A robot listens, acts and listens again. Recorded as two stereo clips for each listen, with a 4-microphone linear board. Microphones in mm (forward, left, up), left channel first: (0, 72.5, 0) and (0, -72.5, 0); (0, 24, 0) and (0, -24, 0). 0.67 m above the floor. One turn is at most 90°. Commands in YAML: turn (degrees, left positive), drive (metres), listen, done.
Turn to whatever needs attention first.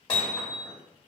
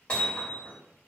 listen: true
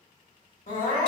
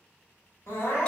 turn: 65
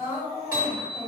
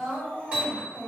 turn: 30
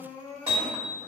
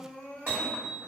turn: 20
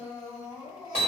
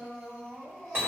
done: "Facing the crying."